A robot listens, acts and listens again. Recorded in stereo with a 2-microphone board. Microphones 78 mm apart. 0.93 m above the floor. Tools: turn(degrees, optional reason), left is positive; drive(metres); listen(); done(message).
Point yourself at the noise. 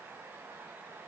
listen()
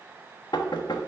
turn(degrees=70, reason="The knocking: about 70° left or 110° left.")
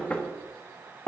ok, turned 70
turn(degrees=20, reason="So it is at 20° left.")
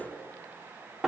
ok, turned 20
done("Facing the knocking.")